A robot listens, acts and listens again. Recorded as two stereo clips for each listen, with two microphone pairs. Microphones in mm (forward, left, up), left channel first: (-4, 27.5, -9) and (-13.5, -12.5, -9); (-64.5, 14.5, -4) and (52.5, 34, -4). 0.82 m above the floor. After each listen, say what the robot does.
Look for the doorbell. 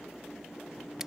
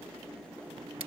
Keep listening.
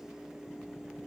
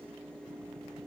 Keep listening.
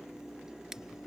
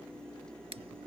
I can't make out a doorbell to turn to.